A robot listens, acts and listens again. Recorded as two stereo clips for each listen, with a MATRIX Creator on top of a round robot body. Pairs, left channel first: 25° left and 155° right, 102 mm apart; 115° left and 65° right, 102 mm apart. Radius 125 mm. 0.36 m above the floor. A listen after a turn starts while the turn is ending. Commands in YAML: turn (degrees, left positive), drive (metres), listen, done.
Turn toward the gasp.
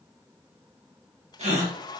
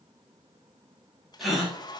turn: -155
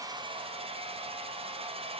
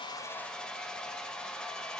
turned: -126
turn: -30
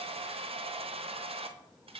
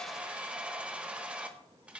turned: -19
turn: -10
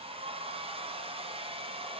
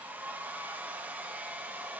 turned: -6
done: "Facing where the gasp came from. I can't hear it now."